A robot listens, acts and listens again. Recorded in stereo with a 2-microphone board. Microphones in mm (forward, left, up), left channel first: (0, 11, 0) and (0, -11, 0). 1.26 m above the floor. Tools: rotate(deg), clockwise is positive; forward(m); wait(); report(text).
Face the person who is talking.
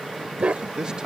rotate(30)
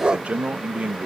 rotate(120)
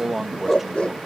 rotate(10)
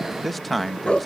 report("Found it: a man speaking, straight ahead.")